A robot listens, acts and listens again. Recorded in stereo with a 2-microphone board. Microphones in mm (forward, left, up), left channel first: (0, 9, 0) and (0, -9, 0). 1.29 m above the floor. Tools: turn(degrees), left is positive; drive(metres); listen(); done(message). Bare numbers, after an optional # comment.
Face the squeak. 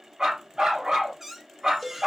# The squeak: about 20° right or 160° right.
turn(-20)
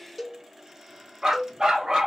listen()
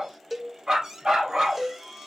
# So it is at 135° right.
turn(-135)
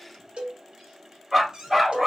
# The squeak is now 55° right.
turn(-55)
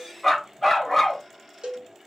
listen()
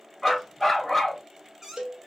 # The squeak is now 25° right.
turn(-25)
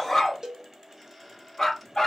listen()
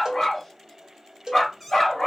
listen()
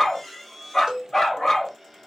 done("Found it: a squeak, straight ahead, 1 to 2 m away.")